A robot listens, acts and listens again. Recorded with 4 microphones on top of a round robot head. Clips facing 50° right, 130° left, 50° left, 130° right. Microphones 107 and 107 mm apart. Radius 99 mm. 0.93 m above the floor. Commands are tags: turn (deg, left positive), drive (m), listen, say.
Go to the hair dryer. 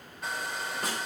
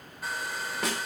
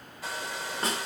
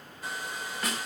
<turn deg="40"/>
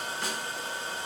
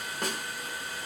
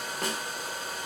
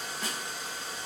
<turn deg="15"/>
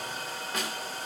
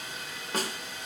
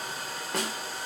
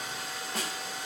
<drive m="1.0"/>
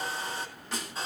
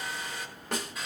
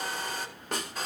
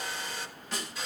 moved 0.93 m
<turn deg="10"/>
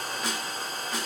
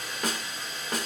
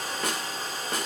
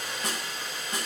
<drive m="1.0"/>
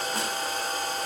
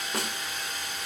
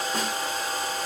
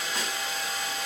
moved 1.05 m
<drive m="1.0"/>
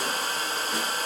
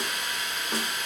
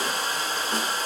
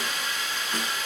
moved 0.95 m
<drive m="1.0"/>
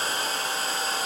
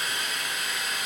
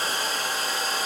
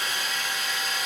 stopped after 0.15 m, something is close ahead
<say>I am next to the hair dryer.</say>